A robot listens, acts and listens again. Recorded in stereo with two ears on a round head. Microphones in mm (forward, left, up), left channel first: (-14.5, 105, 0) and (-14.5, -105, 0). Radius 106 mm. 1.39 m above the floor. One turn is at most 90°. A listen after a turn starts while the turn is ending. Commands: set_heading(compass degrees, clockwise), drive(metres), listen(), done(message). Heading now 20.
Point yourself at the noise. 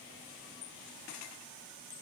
listen()
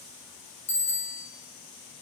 set_heading(350)
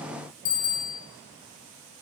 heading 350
set_heading(260)
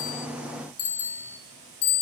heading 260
set_heading(195)
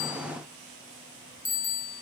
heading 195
set_heading(180)
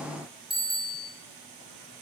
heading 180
done("Found it: a bicycle bell, straight ahead.")